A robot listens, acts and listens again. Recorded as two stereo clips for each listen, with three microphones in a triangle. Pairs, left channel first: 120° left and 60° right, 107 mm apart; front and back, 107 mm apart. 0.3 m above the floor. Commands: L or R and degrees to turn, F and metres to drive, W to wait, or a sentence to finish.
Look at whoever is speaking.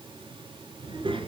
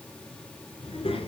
R25
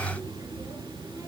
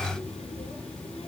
Facing the child speaking, 2 to 4 m away.